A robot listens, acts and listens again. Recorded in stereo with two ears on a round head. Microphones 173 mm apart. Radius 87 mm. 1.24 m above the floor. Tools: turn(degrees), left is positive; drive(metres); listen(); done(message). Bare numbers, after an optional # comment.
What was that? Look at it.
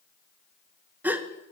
turn(-30)
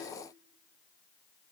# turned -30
listen()
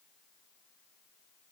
done("I heard a gasp, but can't make it out now. It was about 20° left or 140° right.")